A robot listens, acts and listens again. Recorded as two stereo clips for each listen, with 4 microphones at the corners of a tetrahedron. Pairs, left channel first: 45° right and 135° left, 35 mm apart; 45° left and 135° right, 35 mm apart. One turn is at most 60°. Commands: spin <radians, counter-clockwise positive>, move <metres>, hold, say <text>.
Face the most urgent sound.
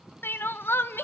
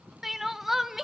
spin -1.05
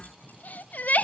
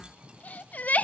say Facing the crying, 1 to 2 m away.